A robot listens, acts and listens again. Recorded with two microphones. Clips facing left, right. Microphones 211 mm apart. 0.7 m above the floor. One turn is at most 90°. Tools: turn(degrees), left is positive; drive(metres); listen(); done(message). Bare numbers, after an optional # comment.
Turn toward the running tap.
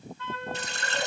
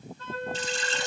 # The running tap: about 65° left or 115° left.
turn(65)
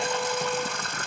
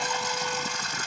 # So it is at 55° left.
turn(55)
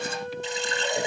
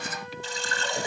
# The running tap is now 20° left.
turn(20)
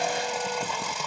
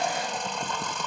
# The running tap is now 10° left.
turn(10)
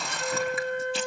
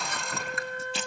done("Found it: a running tap, straight ahead.")